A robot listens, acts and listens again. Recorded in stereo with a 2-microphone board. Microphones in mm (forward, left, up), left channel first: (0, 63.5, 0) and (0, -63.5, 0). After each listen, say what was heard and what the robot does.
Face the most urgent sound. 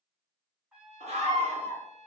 The scream: about 55° right or 125° right. Turn 55° right.
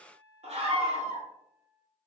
So it is at 60° right. Turn 60° right.
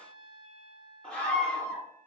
The scream is now 10° left. Turn 10° left.
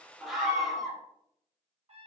Facing the scream.